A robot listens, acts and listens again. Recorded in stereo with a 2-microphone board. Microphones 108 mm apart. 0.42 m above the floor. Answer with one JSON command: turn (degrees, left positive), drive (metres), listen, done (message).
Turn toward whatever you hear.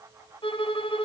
{"turn": 55}
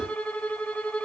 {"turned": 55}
{"turn": 15}
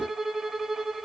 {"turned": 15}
{"done": "Facing the violin."}